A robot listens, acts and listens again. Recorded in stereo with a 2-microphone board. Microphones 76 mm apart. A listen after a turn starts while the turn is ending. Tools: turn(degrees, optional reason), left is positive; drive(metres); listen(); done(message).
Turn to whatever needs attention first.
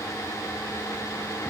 listen()
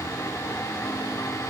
listen()
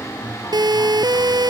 turn(degrees=-65, reason="The siren: about 65° right or 115° right.")
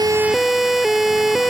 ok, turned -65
done("Facing the siren.")